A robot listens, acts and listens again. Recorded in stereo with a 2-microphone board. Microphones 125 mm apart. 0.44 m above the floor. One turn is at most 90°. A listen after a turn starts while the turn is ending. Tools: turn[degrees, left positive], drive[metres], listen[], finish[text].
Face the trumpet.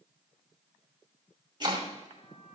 Action: listen[]
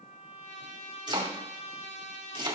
Action: turn[90]
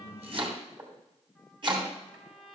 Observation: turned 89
Action: finish[Found it: a trumpet, straight ahead.]